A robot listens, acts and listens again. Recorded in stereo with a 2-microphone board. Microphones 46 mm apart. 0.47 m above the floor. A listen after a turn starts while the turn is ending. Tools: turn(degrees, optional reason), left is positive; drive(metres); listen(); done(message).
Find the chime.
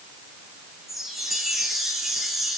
turn(degrees=-30)
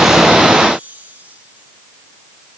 turn(degrees=-150, reason="So it is at 150° right.")
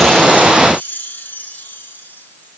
turn(degrees=45, reason="The chime is now 45° left.")
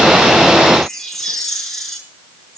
done("Found it: a chime, straight ahead.")